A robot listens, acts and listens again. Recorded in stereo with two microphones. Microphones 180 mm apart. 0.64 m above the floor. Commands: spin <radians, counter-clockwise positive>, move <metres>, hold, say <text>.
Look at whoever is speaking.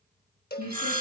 spin -1.57
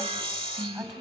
say Facing the woman speaking, over 4 m away.